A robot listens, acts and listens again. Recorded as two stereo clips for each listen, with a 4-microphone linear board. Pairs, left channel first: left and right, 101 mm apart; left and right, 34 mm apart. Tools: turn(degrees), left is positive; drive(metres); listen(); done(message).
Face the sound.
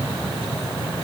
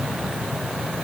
listen()
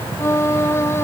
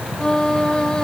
turn(degrees=25)
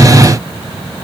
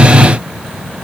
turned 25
listen()
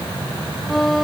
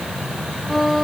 done("Facing the violin.")